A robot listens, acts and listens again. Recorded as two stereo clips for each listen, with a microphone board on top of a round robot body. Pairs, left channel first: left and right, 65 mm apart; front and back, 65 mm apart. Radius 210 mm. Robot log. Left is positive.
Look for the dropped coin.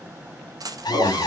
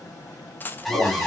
note: The dropped coin: 60° right.
cmd yaw -60
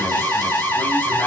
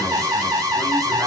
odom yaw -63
end: I heard a dropped coin from this way, but can't make it out now.